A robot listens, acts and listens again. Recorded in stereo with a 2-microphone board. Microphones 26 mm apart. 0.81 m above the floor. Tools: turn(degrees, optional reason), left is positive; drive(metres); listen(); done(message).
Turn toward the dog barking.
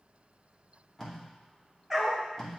turn(degrees=-30)
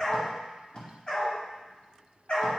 turn(degrees=45, reason="So it is at 45° left.")
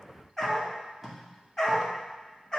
turn(degrees=15, reason="The dog barking is now 15° left.")
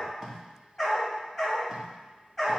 done("Facing the dog barking.")